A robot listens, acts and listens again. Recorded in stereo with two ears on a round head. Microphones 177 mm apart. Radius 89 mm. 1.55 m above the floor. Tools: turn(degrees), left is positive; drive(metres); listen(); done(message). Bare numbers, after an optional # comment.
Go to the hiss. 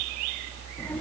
listen()
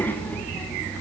listen()
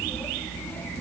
done("I can't make out a hiss, only a child speaking.")